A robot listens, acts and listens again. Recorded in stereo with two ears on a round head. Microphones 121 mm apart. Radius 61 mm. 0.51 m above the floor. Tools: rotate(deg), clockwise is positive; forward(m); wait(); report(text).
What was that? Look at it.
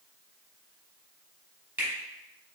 rotate(30)
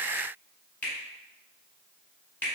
rotate(-15)
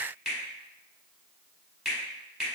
report("Facing the finger snap, 1 to 2 m away.")